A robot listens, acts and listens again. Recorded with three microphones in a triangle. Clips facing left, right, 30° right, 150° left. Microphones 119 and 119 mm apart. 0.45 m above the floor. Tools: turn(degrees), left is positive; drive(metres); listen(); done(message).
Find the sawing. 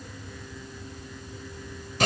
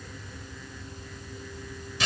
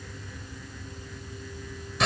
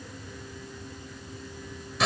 listen()
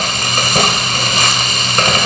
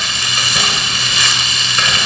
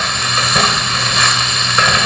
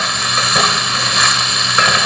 listen()
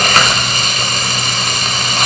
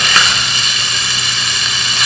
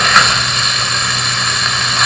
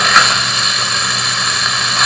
done("I can't make out sawing, only frying.")